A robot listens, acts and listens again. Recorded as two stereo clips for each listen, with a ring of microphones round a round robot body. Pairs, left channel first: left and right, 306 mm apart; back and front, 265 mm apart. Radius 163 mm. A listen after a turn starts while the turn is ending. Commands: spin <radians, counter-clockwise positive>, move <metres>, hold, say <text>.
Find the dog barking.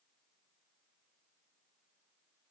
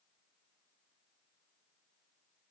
hold
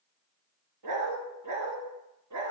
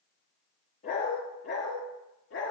spin -2.27
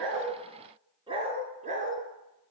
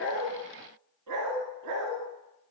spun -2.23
spin -0.44
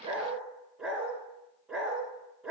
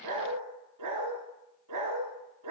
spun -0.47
say Facing the dog barking.